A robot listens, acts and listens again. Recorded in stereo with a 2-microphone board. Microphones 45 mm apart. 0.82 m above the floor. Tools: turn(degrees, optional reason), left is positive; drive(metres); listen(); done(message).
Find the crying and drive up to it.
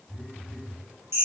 listen()
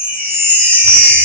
listen()
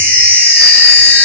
done("I can't make out crying to turn to.")